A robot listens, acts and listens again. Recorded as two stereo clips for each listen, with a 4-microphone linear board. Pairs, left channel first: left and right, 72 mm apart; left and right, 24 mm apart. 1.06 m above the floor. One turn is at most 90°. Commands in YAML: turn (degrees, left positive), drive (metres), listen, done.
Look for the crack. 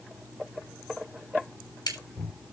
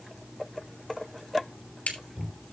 turn: 90
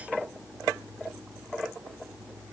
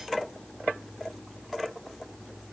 done: "I heard a crack from this way, but can't make it out now."